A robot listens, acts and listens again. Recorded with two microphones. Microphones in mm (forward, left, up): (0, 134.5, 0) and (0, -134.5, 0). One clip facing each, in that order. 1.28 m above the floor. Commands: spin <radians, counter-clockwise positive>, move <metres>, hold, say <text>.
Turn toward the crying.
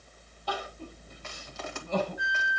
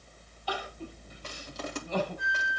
spin 0.87
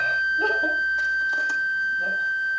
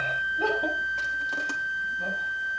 hold
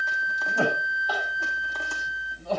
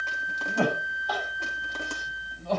say Facing the crying, over 4 m away.